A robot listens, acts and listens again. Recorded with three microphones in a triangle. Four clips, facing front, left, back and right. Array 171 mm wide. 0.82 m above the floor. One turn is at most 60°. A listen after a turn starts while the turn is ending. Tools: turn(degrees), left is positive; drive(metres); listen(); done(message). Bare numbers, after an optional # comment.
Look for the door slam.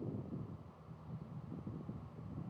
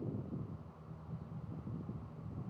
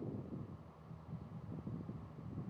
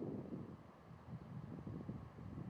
listen()
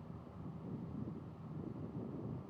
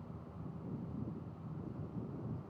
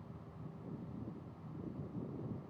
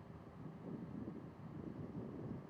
listen()
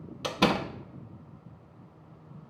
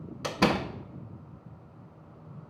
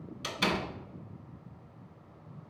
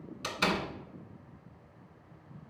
# The door slam: 40° left.
turn(40)
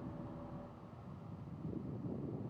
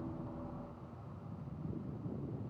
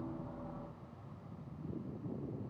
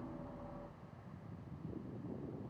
done("Facing where the door slam came from. I can't hear it now.")